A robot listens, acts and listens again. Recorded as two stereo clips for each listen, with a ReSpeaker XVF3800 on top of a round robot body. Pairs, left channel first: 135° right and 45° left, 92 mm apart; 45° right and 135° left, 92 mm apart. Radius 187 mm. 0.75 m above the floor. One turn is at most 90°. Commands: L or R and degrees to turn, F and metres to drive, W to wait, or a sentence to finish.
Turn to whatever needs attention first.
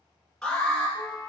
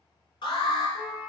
R50
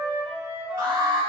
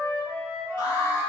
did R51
Facing the alarm, 1 to 2 m away.